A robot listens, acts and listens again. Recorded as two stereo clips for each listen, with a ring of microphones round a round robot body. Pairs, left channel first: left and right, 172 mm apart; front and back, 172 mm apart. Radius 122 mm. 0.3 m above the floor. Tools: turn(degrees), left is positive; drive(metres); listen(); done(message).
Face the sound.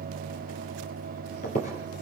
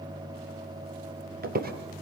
turn(degrees=150)
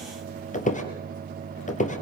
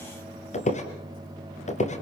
turn(degrees=45)
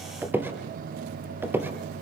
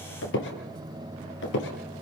turn(degrees=-10)
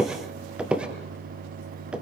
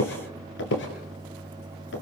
done("Facing the squeak, 2 to 4 m away.")